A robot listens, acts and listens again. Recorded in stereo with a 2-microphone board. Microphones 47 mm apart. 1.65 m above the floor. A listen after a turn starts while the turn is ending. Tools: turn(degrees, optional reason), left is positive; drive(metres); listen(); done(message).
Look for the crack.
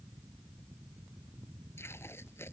listen()
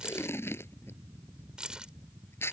listen()
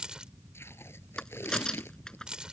turn(degrees=15, reason="The crack: about 15° left or 165° left.")
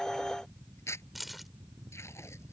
listen()
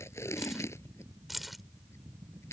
done("I heard a crack, but can't make it out now. It was about straight ahead or 150° left.")